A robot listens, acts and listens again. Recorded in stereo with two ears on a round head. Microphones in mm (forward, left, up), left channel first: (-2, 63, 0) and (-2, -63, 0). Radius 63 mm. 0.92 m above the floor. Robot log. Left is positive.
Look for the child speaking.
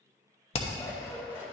cmd idle
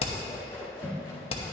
cmd idle
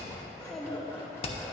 cmd yaw +30
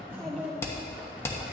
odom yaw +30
cmd yaw +30
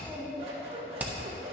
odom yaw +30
cmd yaw +30
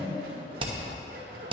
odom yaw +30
cmd idle
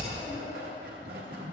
cmd idle
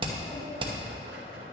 end: I heard a child speaking, but can't make it out now. It was about 25° right or 145° left.